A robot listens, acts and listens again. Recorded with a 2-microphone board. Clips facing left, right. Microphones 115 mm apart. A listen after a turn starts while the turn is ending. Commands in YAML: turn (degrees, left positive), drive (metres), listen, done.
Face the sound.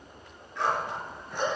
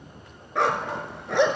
turn: -90
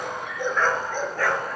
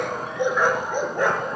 turn: -20
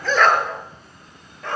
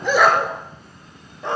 turn: -20
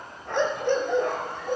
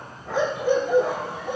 turn: -10
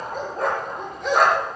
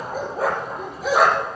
done: "Found it: a dog barking, straight ahead, over 4 m away."